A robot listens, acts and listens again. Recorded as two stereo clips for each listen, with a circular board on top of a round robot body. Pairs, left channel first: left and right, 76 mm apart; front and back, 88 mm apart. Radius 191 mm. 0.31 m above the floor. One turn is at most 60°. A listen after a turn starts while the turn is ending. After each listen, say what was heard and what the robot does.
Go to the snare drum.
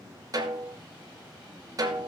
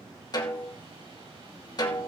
The snare drum: 45° right. Turn 45° right.
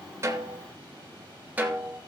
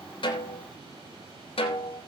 The snare drum is now 15° right. Turn 15° right.
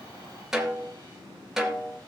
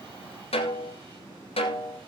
Drive 1.0 m forward.
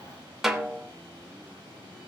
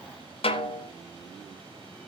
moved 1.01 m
Drive 1.0 m forward.
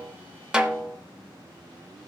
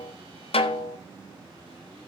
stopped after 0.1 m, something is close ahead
The snare drum is now 10° right. Turn 10° right.
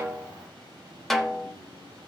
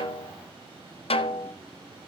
I am next to the snare drum.